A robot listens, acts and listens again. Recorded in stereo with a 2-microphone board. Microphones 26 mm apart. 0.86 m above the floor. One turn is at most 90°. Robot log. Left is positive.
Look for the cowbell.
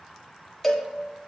cmd yaw +30
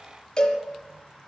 note: So it is at 150° left.
cmd yaw +90
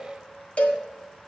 note: The cowbell is now 65° left.
cmd yaw +65
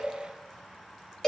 note: The cowbell is now 25° left.
cmd yaw +25
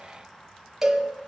note: The cowbell is now 10° right.
cmd yaw -10
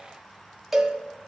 end: Found it: a cowbell, straight ahead, 1 to 2 m away.